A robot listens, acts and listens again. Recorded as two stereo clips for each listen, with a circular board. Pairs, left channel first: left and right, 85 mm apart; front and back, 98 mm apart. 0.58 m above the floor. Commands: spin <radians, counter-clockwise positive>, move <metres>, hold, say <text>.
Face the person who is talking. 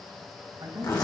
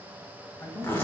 spin -1.05
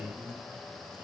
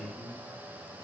spin -0.26
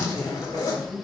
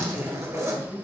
spin -0.35
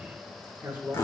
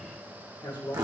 spin -0.35
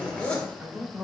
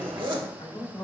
spin -0.44
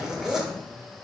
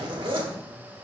hold
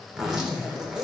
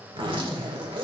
hold
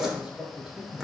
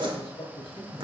say Found it: a man speaking, straight ahead, 1 to 2 m away.